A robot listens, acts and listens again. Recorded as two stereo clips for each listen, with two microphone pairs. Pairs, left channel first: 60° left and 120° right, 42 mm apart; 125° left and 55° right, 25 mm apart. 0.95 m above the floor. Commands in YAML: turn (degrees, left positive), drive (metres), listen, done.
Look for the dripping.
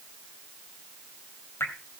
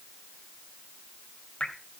turn: 75
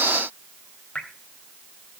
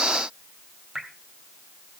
done: "Found it: dripping, straight ahead."